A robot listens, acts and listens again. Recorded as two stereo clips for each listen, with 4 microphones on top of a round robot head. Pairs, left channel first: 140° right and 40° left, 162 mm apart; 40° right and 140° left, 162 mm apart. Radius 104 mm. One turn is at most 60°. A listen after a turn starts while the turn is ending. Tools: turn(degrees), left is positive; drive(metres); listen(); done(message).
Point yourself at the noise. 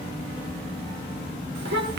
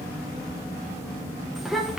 turn(degrees=55)
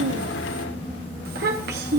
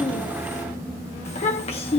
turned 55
turn(degrees=15)
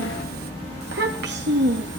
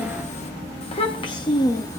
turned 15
turn(degrees=30)
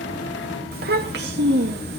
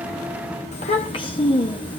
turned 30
turn(degrees=20)
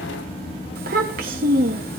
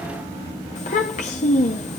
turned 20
done("Found it: a child speaking, straight ahead.")